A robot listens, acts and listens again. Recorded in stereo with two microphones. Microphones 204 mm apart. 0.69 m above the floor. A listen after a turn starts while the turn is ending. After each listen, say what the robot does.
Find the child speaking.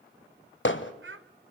Turn 90° right.
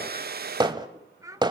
Turn 20° right.
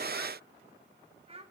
Turn 30° right.
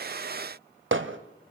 Keep listening.
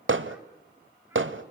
Keep listening.
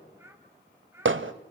Turn 10° right.
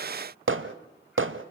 Keep listening.
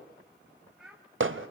Found it: a child speaking, straight ahead.